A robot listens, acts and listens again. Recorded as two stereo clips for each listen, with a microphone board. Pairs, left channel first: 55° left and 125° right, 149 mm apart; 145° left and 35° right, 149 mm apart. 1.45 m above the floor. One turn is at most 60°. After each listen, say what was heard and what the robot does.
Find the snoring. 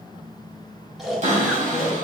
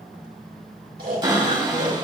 The snoring: 35° right. Turn 35° right.
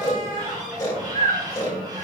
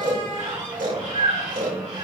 Facing the snoring, 2 to 4 m away.